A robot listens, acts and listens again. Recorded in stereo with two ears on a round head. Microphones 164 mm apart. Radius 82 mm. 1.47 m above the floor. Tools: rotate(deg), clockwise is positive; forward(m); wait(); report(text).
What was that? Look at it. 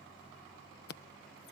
rotate(-60)
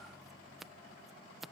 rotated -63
report("Found it: scissors, straight ahead.")